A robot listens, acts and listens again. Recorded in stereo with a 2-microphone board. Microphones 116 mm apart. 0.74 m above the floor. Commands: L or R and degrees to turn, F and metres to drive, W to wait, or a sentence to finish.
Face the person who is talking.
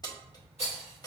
W
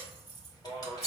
L45
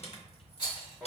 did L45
L10
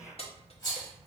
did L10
Found it: a man speaking, straight ahead, 1 to 2 m away.